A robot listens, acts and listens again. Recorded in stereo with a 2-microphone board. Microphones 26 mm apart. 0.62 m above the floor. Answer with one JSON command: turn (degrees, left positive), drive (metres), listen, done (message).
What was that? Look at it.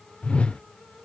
{"turn": 50}
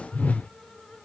{"turn": 75}
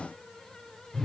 {"turn": 10}
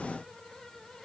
{"listen": true}
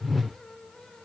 {"done": "Found it: a whoosh, straight ahead."}